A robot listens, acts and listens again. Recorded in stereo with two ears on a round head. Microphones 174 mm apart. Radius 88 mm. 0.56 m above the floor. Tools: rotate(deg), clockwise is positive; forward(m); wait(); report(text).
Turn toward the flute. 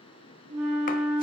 rotate(35)
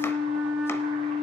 report("Found it: a flute, straight ahead.")